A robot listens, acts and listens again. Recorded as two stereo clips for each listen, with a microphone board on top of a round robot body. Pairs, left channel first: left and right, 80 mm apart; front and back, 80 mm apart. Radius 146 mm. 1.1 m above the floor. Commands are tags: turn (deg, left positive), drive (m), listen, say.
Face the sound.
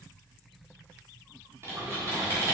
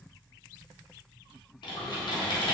<turn deg="-30"/>
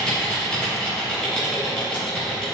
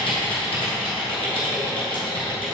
<turn deg="10"/>
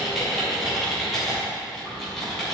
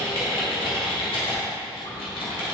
<say>Facing the typing on a keyboard, 1 to 2 m away.</say>